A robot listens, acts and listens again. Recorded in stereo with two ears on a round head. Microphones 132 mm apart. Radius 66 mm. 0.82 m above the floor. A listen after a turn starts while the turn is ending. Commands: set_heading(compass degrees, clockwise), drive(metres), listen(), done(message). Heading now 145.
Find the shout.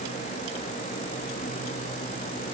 listen()
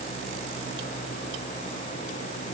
listen()
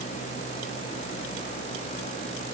done("I can't make out a shout.")